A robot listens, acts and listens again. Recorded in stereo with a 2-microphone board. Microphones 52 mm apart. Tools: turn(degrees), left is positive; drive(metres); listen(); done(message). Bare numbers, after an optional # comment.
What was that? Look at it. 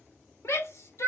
# The shout: about 60° left or 120° left.
turn(60)
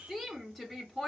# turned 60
done("Found it: a shout, straight ahead.")